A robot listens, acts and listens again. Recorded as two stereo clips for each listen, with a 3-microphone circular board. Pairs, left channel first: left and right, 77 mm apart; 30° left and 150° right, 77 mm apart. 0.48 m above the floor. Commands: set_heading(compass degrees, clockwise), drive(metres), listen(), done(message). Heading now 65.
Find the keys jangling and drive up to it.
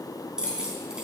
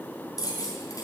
set_heading(75)
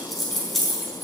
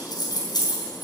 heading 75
drive(1.0)
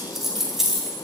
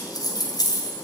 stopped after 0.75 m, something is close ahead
done("Something is in my way. I am facing the keys jangling but have not reached it.")